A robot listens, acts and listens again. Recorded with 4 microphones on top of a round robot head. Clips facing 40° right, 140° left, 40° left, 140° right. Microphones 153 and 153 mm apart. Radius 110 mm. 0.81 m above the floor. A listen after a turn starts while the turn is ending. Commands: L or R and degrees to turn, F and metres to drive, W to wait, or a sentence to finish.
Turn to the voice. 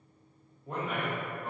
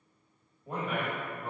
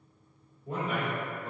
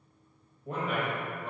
R140
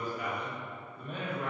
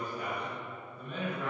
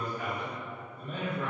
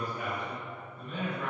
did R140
R10
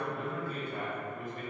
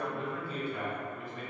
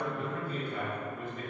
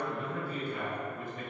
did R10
Found it: a man speaking, straight ahead.